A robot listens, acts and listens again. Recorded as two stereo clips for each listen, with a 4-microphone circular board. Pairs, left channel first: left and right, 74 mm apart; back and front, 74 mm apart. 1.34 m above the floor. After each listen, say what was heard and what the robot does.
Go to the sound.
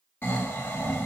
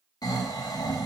The snoring: 155° left. Turn 155° left.
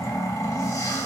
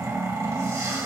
The snoring is now 45° left. Turn 45° left.
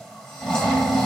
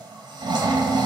Drive 1.0 m forward.
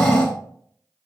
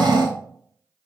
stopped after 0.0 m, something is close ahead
The snoring is now 10° left. Turn 10° left.
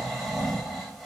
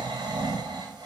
Something is in my way. I am facing the snoring but have not reached it.